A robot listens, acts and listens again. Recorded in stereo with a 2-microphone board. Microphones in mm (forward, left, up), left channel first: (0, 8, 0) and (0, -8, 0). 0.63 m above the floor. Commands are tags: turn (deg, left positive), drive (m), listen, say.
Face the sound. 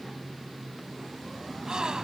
<turn deg="-50"/>
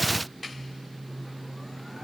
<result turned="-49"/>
<listen/>
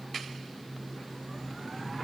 <say>I heard a gasp, but can't make it out now. It was about straight ahead or 80° right.</say>